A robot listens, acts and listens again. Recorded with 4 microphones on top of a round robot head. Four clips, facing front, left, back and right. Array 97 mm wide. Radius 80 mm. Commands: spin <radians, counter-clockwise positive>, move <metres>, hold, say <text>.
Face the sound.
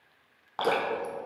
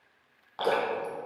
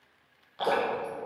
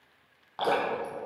say Found it: dripping, straight ahead.